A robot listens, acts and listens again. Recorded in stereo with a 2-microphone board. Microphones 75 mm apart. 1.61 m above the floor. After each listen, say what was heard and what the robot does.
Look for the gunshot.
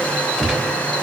Turn 30° left.
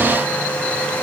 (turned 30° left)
Keep listening.
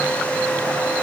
I heard a gunshot, but can't make it out now. It was about 30° right or 150° left.